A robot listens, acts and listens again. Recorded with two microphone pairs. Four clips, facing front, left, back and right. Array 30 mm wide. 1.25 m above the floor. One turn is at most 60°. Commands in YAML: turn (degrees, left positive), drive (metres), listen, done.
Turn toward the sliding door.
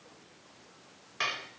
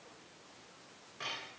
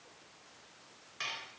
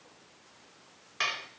listen: true
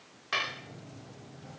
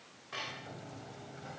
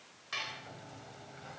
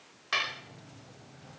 turn: 60
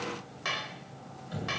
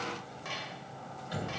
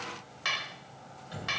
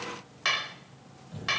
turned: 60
turn: 60
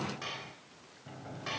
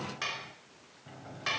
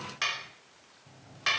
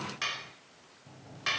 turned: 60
turn: 40
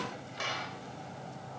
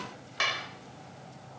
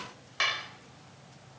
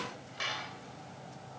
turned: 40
done: "Found it: a sliding door, straight ahead."